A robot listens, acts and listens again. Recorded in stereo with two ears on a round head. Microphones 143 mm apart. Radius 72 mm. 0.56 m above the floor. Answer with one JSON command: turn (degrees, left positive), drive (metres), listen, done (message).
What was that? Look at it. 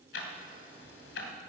{"turn": 90}
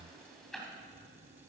{"done": "Found it: ticking, straight ahead, 2 to 4 m away."}